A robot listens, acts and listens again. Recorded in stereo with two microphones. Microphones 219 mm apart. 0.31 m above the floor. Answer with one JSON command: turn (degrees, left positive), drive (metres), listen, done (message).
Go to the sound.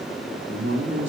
{"turn": -65}
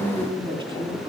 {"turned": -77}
{"turn": -25}
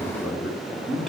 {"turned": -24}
{"drive": 1.0}
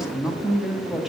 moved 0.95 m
{"drive": 1.0}
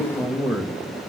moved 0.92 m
{"drive": 1.0}
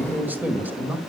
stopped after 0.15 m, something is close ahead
{"turn": -10}
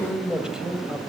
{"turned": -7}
{"done": "Arrived at the man speaking, straight ahead."}